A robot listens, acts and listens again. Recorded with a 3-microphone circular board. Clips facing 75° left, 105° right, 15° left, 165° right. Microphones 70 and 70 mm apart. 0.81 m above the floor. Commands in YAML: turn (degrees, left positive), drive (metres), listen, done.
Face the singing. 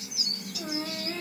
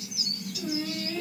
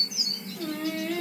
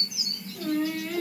turn: 105
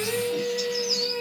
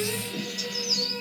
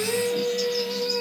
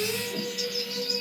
turn: 10
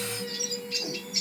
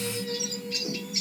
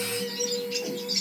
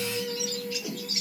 done: "Found it: singing, straight ahead."